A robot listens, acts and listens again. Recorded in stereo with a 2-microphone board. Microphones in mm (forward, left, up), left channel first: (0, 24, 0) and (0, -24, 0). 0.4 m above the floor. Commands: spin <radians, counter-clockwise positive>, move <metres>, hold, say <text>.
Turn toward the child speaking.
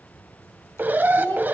spin 0.79
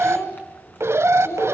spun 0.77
spin 1.48
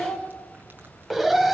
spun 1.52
say Facing the child speaking, over 4 m away.